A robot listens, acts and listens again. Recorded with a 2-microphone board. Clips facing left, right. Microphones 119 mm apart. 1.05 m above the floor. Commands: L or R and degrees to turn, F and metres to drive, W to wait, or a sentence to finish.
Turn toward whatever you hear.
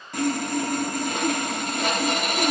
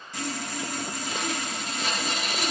L55
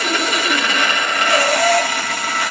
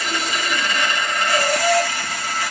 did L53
L70
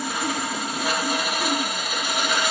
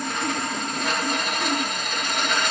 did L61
L10
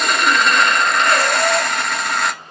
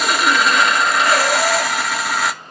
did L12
Facing the sawing, under 1 m away.